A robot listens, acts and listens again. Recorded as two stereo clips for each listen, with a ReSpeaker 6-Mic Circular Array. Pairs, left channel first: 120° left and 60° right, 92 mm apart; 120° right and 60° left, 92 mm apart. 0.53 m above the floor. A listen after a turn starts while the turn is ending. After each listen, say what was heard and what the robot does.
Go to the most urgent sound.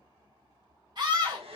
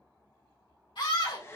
The scream: 100° right. Turn 100° right.
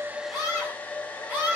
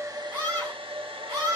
The scream is now 10° left. Turn 10° left.
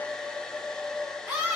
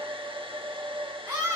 Drive 1.0 m forward.
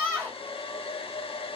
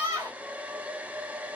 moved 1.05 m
Drive 1.0 m forward.
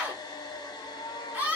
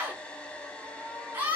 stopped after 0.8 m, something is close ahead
I am next to the scream.